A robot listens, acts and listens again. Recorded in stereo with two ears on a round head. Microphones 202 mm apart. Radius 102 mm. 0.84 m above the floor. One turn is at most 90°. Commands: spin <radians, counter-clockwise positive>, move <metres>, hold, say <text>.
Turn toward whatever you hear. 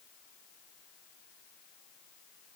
hold
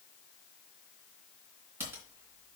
spin -0.52
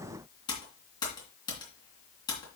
spin 0.35
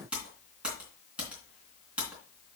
say Facing the typing on a keyboard.